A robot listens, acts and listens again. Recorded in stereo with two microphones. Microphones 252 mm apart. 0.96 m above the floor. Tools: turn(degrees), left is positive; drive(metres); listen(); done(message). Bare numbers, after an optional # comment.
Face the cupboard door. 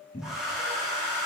# The cupboard door: about 30° left or 150° left.
turn(30)
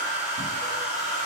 listen()
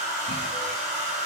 listen()
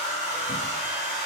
done("I heard a cupboard door, but can't make it out now. It was about straight ahead or 120° left.")